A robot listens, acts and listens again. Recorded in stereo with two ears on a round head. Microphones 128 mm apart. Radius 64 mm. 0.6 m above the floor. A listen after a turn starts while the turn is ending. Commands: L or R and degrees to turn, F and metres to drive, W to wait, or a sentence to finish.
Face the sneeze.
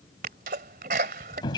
R65
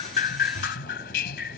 W
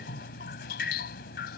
I heard a sneeze, but can't make it out now. It was about straight ahead or 50° right.